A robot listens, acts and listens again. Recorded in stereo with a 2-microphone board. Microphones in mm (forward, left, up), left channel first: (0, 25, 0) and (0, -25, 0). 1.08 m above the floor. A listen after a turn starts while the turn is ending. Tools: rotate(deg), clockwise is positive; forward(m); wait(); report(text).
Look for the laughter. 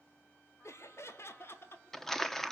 rotate(-50)
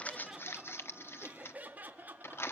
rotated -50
rotate(35)
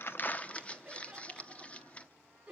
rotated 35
rotate(15)
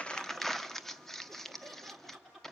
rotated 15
report("Found it: laughter, straight ahead, 2 to 4 m away.")